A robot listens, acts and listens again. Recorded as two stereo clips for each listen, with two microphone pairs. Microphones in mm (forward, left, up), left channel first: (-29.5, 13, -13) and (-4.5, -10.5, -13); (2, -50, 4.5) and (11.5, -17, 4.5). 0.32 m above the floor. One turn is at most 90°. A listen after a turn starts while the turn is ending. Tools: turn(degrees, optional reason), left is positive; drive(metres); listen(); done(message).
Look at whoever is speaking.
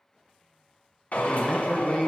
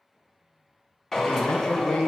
turn(degrees=-90, reason="The man speaking: 165° right.")
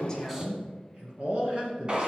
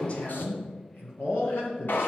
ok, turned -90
turn(degrees=-90, reason="The man speaking is now 95° right.")
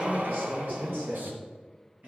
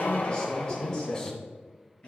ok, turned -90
turn(degrees=-35, reason="The man speaking is now 35° right.")
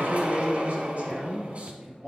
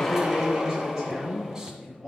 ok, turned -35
done("Found it: a man speaking, straight ahead, over 4 m away.")